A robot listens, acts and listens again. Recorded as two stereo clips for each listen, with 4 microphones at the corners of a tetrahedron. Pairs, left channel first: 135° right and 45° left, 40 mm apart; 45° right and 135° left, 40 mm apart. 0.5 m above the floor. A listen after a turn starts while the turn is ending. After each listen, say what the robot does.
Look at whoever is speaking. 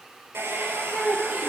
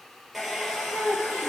Turn 115° left.
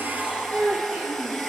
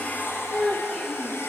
Turn 15° left.
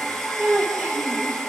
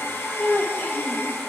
Found it: a child speaking, straight ahead, over 4 m away.